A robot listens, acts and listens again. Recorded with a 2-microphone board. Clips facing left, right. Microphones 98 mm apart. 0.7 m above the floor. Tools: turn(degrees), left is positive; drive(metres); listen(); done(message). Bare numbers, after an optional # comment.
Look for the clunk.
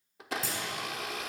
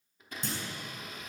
turn(30)
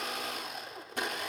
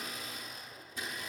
listen()
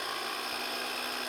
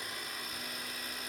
done("I heard a clunk, but can't make it out now. It was about 30° right or 150° left.")